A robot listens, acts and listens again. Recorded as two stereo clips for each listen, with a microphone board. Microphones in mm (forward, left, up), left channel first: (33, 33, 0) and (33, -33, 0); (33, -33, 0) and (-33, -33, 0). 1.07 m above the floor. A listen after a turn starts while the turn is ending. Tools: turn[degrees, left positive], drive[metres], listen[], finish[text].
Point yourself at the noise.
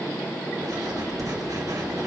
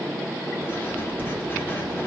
Thought: The writing: 60° right.
Action: turn[-60]
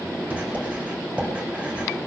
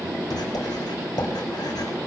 Thought: The writing is now 15° right.
Action: turn[-15]
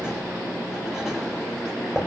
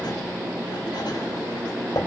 Action: finish[Facing the writing.]